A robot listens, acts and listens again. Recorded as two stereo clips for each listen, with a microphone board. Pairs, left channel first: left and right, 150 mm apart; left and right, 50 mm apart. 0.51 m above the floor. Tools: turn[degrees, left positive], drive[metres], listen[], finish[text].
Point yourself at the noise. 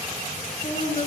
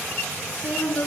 Thought: The woman speaking: about 45° left or 135° left.
Action: turn[45]
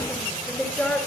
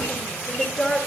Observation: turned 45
Thought: So it is at 10° left.
Action: turn[10]
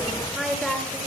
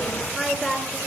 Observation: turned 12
Action: finish[Facing the woman speaking, over 4 m away.]